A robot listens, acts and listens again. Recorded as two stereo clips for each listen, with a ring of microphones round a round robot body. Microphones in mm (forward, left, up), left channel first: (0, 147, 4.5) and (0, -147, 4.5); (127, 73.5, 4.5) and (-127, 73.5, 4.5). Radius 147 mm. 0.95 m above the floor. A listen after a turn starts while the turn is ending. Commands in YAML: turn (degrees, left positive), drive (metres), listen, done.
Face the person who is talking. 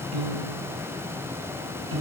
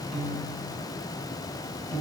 listen: true
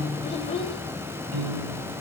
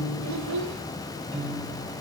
turn: 160
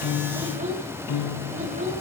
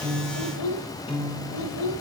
turn: -25
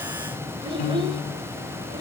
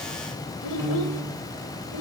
turn: -15
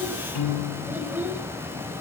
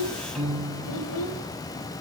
done: "Found it: a child speaking, straight ahead, 2 to 4 m away."